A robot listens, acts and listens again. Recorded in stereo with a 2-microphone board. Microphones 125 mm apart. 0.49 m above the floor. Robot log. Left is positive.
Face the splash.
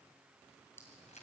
cmd idle
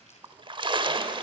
note: The splash: about 40° right or 140° right.
cmd yaw -40
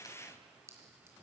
cmd idle
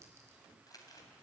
end: I heard a splash, but can't make it out now. It was about straight ahead or 100° right.